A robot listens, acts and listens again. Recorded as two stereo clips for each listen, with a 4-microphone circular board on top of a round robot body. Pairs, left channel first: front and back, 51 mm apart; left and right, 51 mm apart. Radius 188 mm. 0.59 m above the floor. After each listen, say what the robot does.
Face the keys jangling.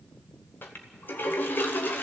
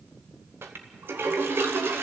Keep listening.
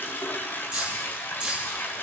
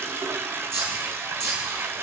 Turn 110° right.
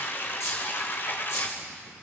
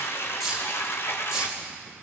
Turn 15° right.
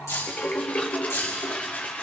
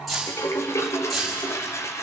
Facing the keys jangling.